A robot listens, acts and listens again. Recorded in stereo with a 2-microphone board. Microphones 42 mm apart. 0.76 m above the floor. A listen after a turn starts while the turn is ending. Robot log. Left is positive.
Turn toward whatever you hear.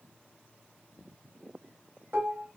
note: The dishes clattering: about 65° right or 115° right.
cmd yaw -65
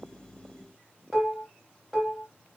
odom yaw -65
end: Found it: dishes clattering, straight ahead.